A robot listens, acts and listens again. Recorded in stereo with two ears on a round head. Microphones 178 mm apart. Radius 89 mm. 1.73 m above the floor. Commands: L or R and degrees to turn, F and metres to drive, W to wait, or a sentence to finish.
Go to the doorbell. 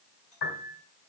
W
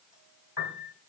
W
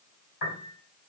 I can't make out a doorbell to turn to.